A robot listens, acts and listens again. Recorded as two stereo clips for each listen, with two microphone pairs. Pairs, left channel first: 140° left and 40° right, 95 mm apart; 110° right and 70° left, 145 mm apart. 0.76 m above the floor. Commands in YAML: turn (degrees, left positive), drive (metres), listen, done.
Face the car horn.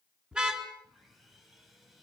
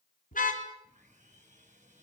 turn: -120
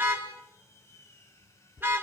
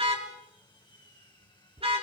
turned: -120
turn: 30
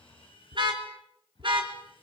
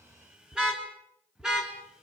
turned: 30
turn: -10
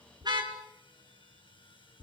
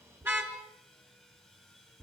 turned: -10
done: "Found it: a car horn, straight ahead, 2 to 4 m away."